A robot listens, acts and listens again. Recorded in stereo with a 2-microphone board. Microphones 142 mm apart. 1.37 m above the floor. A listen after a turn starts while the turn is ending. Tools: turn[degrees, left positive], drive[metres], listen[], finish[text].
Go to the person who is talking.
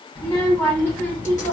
Action: turn[30]
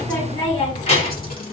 Thought: So it is at 135° left.
Action: turn[135]
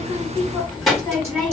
Action: drive[1.0]
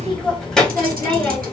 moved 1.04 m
Action: drive[1.0]
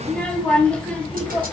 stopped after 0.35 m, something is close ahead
Thought: The child speaking is now 10° left.
Action: turn[10]
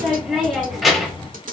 Action: finish[Arrived at the child speaking, straight ahead.]